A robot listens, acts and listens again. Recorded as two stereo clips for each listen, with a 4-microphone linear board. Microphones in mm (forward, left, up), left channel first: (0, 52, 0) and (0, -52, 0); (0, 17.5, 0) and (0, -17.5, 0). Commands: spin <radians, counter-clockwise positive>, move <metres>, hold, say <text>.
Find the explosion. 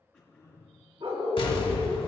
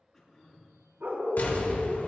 spin 0.96
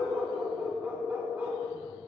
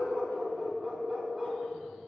hold
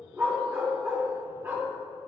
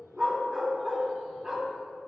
say I heard an explosion, but can't make it out now. It was about straight ahead or 70° left.